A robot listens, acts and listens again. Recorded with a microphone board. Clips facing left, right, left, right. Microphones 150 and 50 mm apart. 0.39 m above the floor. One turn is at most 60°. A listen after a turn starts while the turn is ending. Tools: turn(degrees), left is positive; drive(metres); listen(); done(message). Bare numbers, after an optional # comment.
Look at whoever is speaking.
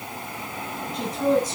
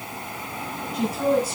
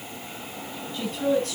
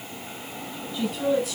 turn(-30)
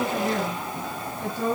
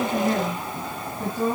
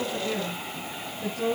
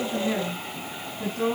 # So it is at 130° right.
turn(-60)
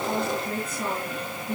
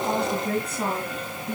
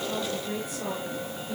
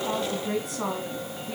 # The woman speaking is now 75° right.
turn(-60)
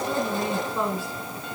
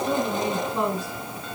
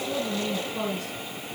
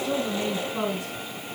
# The woman speaking is now 20° right.
turn(-20)
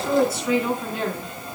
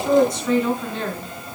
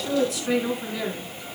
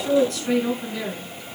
done("Found it: a woman speaking, straight ahead, over 4 m away.")